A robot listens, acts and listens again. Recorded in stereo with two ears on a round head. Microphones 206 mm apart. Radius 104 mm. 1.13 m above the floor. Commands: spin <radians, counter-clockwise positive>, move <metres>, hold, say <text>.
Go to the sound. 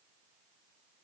hold
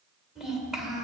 spin 0.52
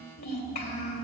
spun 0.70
spin 2.44
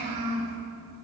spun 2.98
spin -0.52
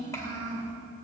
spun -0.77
spin 0.26
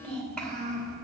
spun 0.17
move 1.0
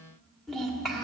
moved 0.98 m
move 1.0
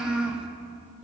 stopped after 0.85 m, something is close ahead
say Arrived at the child speaking, straight ahead.